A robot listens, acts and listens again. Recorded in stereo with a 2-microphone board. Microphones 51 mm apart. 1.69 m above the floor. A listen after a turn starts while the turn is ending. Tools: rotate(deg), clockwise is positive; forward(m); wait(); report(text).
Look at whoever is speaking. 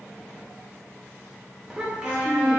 rotate(15)
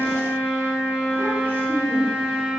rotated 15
wait()
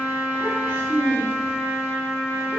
rotate(40)
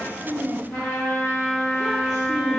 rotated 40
report("Found it: a child speaking, straight ahead.")